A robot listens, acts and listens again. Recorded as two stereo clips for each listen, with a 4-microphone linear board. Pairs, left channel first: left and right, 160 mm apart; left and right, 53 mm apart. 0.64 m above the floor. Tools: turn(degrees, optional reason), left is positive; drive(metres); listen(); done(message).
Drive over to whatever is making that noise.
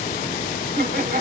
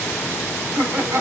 turn(degrees=-90)
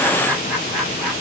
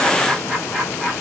drive(metres=1.0)
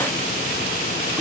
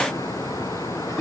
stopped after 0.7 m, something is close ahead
done("Blocked. The laughter is further on, straight ahead.")